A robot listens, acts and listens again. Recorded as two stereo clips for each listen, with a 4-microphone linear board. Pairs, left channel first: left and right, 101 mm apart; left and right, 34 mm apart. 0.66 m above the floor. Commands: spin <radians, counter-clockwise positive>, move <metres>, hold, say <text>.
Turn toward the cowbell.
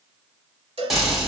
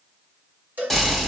spin -1.31
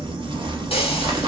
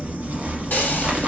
hold
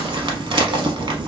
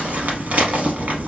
hold
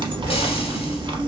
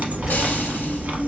say I heard a cowbell, but can't make it out now. It was about straight ahead or 30° right.